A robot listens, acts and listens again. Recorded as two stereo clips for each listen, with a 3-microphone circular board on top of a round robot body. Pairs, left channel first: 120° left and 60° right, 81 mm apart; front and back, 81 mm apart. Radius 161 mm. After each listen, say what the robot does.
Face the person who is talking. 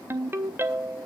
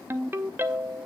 Keep listening.
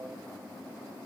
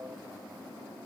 Keep listening.
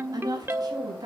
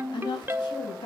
Turn 25° right.
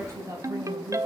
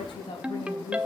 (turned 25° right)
Turn 10° right.
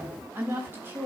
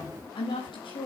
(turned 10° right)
Facing the woman speaking, over 4 m away.